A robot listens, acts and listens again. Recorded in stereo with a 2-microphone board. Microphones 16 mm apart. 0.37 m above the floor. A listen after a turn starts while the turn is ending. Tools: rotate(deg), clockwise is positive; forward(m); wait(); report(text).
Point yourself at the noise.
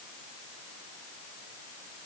wait()
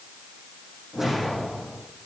rotate(30)
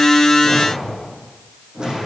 rotate(135)
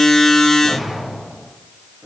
rotate(30)
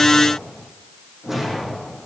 rotate(15)
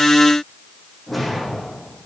report("Found it: a whoosh, straight ahead.")